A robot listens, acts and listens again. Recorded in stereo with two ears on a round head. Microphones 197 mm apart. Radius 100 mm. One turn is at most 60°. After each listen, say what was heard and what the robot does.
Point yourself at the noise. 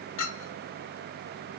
The clink: about 65° left or 115° left. Turn 60° left.
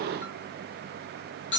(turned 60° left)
So it is at 50° left. Turn 50° left.
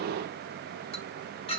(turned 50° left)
The clink is now 25° left. Turn 25° left.
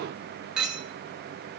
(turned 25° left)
Facing the clink, under 1 m away.